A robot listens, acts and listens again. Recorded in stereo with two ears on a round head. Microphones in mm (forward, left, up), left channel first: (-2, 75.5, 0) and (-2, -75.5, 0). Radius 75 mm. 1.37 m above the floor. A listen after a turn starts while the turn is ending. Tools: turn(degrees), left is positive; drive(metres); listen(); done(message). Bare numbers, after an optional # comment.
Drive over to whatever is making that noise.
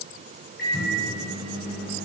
# The microwave: about 60° left or 120° left.
turn(60)
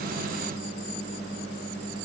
# So it is at 60° left.
turn(60)
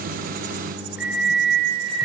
drive(1.0)
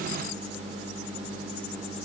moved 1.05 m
drive(1.0)
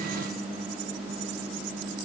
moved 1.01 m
drive(1.0)
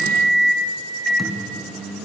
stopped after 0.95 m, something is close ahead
done("Arrived at the microwave, straight ahead.")